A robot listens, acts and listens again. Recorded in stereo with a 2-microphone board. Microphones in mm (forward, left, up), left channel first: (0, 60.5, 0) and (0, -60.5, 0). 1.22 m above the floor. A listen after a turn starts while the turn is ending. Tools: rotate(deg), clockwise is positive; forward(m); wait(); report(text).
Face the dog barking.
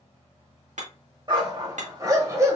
rotate(25)
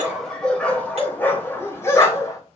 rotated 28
rotate(-30)
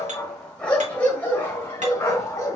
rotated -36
rotate(-25)
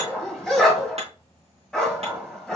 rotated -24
report("Facing the dog barking.")